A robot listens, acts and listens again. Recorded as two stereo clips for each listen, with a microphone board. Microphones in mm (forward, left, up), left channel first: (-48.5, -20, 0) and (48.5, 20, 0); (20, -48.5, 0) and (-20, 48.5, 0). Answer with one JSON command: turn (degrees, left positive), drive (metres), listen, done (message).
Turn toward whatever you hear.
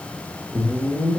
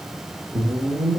{"turn": 95}
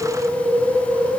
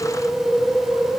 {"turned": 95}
{"turn": 15}
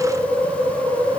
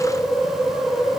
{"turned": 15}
{"done": "Facing the whoosh, 1 to 2 m away."}